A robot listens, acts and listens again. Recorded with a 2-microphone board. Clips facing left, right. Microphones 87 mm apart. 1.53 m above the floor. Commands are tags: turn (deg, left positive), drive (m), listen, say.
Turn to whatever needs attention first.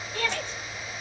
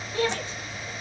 <turn deg="-15"/>
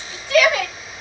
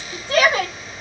<turn deg="-150"/>
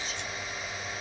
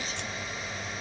<listen/>
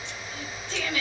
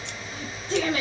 <turn deg="-50"/>
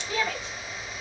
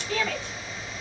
<turn deg="10"/>
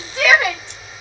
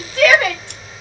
<say>Facing the shout.</say>